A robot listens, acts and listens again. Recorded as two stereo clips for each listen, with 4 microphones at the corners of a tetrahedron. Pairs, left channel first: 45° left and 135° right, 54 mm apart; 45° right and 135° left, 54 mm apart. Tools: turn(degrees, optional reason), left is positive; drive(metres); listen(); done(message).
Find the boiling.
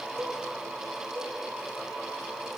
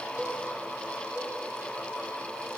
listen()
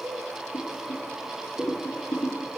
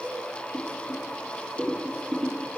turn(degrees=85, reason="The boiling: 85° left.")
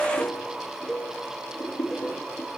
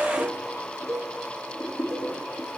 turn(degrees=10, reason="The boiling is now 10° left.")
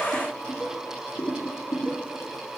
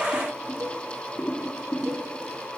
done("Facing the boiling.")